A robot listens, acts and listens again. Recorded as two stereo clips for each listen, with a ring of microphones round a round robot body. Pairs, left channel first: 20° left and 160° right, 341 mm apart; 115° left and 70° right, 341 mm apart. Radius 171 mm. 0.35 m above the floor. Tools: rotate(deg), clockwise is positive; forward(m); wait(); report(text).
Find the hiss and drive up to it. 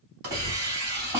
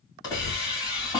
rotate(170)
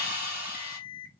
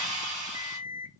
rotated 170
rotate(35)
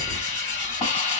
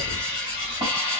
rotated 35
forward(1.0)
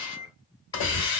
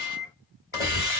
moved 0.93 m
rotate(-10)
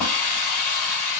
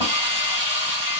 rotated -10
forward(1.0)
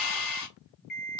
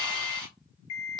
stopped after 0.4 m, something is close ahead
report("Arrived at the hiss, straight ahead.")